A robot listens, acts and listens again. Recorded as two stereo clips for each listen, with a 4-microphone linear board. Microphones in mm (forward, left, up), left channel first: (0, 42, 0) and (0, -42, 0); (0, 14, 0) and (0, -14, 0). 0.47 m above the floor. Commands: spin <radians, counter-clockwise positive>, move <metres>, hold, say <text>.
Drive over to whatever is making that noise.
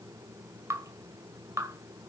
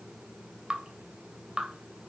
spin -0.61
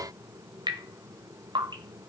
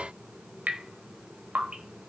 spin -1.83
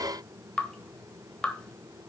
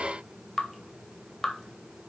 spin 0.17
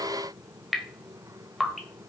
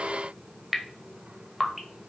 move 1.0
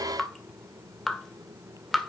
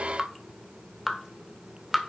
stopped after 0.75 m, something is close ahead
say Arrived at the dripping, straight ahead.